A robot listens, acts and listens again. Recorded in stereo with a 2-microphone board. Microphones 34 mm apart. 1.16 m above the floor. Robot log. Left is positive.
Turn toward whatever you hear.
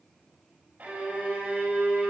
note: The violin: about 45° right or 135° right.
cmd yaw -45
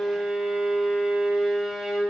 end: Facing the violin, over 4 m away.